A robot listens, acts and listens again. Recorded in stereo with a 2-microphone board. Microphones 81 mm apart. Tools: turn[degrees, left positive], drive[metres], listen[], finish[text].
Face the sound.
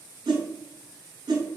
Thought: The whoosh: about 75° right or 105° right.
Action: turn[-75]
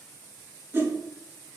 Thought: So it is at 30° right.
Action: turn[-30]
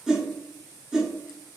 Action: finish[Facing the whoosh, under 1 m away.]